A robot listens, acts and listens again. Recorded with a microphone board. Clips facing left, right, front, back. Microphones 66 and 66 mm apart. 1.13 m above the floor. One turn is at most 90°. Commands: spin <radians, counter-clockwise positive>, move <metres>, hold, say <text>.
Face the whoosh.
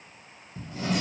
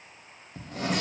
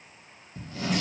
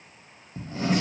hold
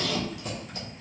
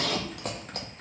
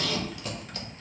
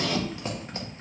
hold
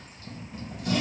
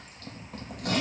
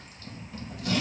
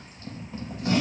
say I can't make out a whoosh to turn to.